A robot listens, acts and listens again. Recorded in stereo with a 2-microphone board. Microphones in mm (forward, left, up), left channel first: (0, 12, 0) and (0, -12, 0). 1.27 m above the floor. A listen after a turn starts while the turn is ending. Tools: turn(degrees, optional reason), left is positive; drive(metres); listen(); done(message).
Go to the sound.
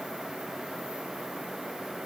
listen()
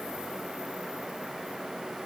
listen()
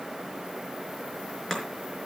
turn(degrees=20, reason="The chopping: about 20° left or 160° left.")
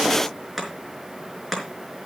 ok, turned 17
drive(metres=1.0)
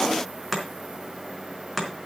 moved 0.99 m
drive(metres=1.0)
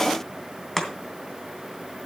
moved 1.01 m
turn(degrees=15, reason="The chopping is now 15° left.")
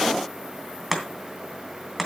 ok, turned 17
drive(metres=1.0)
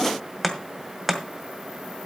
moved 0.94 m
drive(metres=1.0)
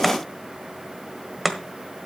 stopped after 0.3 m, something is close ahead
done("Arrived at the chopping, straight ahead.")